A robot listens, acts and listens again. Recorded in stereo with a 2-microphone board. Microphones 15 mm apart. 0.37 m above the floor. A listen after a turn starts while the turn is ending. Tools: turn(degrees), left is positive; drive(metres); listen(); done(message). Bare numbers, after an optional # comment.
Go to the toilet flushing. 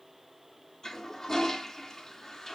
# The toilet flushing: about 35° left or 145° left.
turn(35)
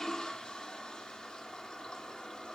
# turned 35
# So it is at 110° left.
turn(110)
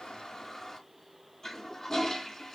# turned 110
# The toilet flushing is now 30° left.
turn(30)
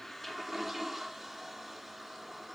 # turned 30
# The toilet flushing is now 10° right.
turn(-10)
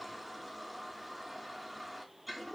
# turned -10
drive(1.0)
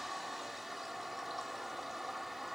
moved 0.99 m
# The toilet flushing is now 15° right.
turn(-15)
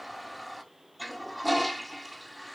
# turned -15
drive(1.0)
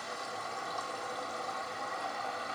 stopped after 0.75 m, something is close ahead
done("I am next to the toilet flushing.")